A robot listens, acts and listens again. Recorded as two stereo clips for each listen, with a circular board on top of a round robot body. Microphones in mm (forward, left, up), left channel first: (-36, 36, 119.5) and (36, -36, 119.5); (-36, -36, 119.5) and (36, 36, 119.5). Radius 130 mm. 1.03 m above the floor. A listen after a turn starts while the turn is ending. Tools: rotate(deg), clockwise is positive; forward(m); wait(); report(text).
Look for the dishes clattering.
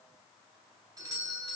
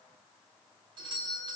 wait()
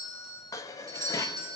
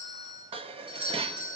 rotate(-75)
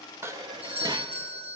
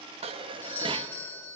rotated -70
report("Found it: dishes clattering, straight ahead.")